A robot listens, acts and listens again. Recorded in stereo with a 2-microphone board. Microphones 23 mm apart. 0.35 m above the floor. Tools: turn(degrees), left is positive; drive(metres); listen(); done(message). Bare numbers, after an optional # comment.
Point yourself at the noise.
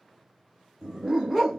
turn(30)
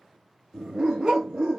# So it is at 20° right.
turn(-20)
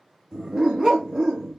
done("Facing the dog barking, 1 to 2 m away.")